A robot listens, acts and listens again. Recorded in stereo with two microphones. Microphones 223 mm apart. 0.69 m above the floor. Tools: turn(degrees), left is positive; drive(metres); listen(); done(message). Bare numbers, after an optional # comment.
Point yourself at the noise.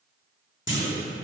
# The clunk: about 60° left or 120° left.
turn(60)
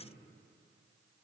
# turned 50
listen()
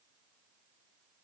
done("I heard a clunk, but can't make it out now. It was about 10° left or 70° left.")